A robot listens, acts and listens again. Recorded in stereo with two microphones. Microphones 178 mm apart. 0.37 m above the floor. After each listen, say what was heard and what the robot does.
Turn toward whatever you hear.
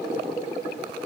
Keep listening.
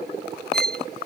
The violin: about 60° right or 120° right. Turn 60° right.
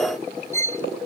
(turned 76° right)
So it is at 15° left. Turn 15° left.
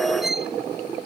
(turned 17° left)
Found it: a violin, straight ahead.